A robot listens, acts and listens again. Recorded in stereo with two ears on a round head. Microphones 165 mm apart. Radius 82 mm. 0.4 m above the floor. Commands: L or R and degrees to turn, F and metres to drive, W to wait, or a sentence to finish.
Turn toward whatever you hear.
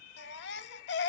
L65
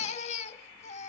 L40
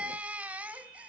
R10
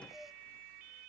W
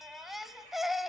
Facing the baby crying, under 1 m away.